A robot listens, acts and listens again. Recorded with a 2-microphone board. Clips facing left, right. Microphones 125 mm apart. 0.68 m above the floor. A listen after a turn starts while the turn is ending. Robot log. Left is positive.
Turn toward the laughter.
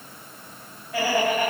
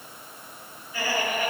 cmd yaw +90
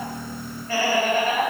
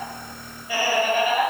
note: So it is at 15° right.
cmd yaw -15
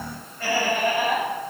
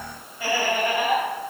note: The laughter is now 10° right.
cmd yaw -10
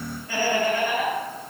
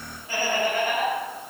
note: The laughter is now 20° right.
cmd yaw -20
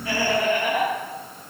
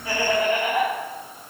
end: Found it: laughter, straight ahead, 2 to 4 m away.